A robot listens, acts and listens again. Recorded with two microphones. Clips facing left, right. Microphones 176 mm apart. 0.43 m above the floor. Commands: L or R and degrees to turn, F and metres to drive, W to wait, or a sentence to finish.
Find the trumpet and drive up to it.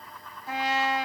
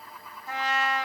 L30
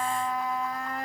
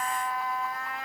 L135
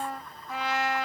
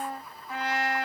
F1.0
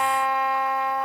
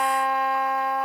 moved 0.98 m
F1.0
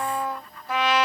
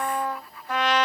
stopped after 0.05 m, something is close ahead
L10
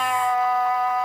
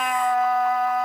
Arrived at the trumpet, straight ahead.